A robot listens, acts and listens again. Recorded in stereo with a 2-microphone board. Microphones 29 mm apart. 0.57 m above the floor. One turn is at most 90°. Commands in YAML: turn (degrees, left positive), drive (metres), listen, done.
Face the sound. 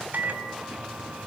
turn: -65
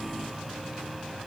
listen: true
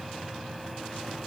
listen: true
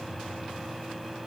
done: "Facing the microwave."